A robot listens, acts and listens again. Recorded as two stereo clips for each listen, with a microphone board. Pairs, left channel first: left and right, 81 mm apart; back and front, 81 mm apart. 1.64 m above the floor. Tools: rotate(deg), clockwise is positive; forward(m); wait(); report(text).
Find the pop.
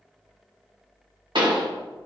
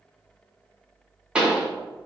rotate(80)
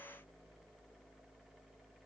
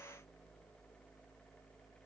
report("I heard a pop from this way, but can't make it out now.")